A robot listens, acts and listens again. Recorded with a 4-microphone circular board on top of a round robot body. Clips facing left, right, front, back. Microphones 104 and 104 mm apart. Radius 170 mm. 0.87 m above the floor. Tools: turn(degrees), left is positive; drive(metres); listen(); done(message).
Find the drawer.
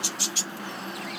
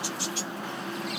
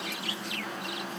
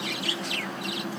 listen()
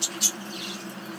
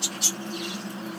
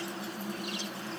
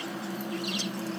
listen()
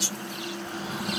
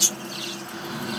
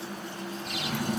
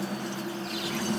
turn(degrees=40)
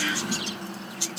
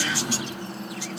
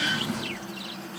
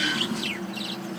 turn(degrees=-15)
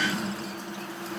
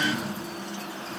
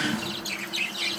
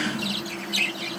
done("Found it: a drawer, straight ahead.")